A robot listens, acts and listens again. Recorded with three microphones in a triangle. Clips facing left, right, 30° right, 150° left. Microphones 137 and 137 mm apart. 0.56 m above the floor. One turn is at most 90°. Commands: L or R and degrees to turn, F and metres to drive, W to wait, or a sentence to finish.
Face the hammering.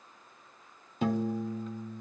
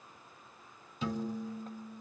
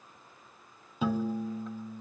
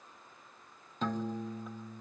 W
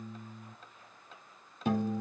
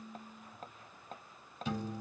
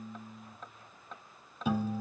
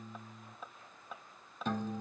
R90
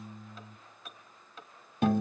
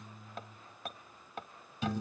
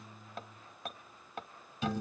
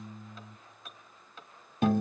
R60
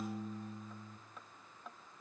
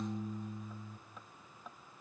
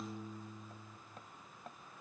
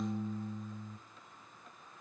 Facing the hammering.